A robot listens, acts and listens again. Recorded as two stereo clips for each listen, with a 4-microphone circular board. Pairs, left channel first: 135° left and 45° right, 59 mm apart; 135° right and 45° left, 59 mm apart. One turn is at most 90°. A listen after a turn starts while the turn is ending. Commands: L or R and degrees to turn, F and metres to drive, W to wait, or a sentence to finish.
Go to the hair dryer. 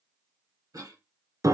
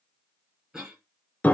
W
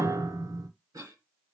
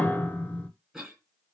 W
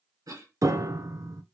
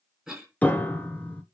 I can't make out a hair dryer to turn to.